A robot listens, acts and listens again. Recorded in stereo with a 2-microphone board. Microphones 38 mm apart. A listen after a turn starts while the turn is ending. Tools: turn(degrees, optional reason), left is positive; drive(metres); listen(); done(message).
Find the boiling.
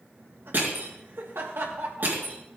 listen()
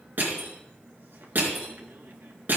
listen()
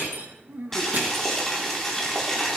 turn(degrees=30)
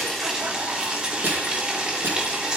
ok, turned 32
turn(degrees=-25, reason="So it is at 25° right.")
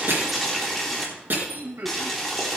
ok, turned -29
done("Facing the boiling, 2 to 4 m away.")